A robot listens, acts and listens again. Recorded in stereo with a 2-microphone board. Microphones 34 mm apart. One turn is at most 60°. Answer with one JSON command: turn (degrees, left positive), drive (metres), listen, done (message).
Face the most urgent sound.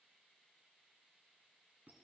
{"listen": true}
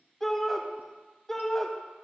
{"turn": 30}
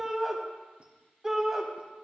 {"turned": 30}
{"turn": -15}
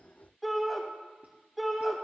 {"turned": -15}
{"done": "Found it: a shout, straight ahead."}